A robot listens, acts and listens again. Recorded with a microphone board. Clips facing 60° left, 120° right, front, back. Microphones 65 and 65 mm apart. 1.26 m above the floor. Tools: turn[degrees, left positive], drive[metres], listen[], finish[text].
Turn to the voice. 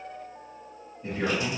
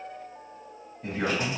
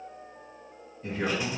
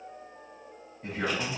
Thought: The man speaking: 125° right.
Action: turn[-125]
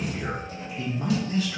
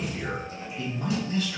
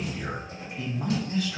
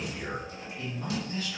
Action: finish[Found it: a man speaking, straight ahead, 1 to 2 m away.]